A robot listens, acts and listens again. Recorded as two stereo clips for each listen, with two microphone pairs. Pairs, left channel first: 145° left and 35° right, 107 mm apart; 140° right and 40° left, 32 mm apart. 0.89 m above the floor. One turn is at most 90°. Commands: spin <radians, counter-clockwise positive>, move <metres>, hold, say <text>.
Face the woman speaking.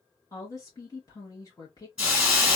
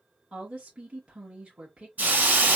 spin 1.57
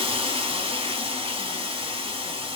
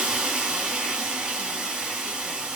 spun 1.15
spin 0.52
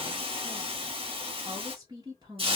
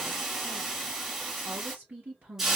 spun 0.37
spin 0.17
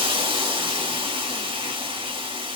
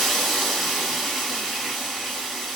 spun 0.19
hold
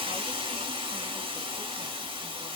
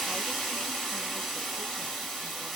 hold
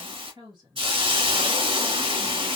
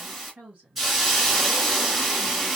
say Found it: a woman speaking, straight ahead.